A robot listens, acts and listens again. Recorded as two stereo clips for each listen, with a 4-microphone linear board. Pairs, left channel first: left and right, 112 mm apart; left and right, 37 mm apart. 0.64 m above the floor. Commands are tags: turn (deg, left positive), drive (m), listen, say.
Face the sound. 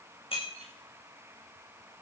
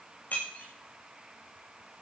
<turn deg="55"/>
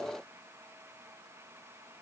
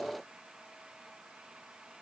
<listen/>
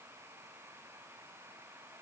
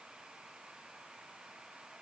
<say>I heard breaking glass, but can't make it out now. It was about straight ahead or 70° left.</say>